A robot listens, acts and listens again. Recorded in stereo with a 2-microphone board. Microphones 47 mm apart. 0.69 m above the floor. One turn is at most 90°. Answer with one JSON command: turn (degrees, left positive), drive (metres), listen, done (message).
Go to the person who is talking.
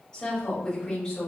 {"turn": 30}
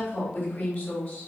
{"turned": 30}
{"turn": 90}
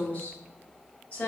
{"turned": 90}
{"turn": 50}
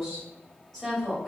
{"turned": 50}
{"turn": 10}
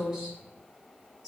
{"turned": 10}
{"drive": 1.0}
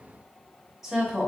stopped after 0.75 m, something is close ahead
{"done": "Arrived at the woman speaking, straight ahead."}